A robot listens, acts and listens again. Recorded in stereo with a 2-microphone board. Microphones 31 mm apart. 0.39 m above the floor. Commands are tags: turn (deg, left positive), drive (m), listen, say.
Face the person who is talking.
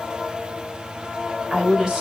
<turn deg="-20"/>
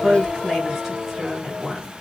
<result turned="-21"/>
<say>Facing the woman speaking, 2 to 4 m away.</say>